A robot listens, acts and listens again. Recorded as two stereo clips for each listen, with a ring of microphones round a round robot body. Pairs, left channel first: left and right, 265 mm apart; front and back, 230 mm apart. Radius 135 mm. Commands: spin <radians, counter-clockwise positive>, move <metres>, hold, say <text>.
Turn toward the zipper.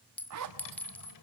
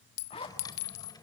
spin -1.22
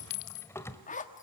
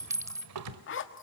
spin 0.52
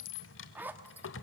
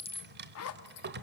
say Facing the zipper.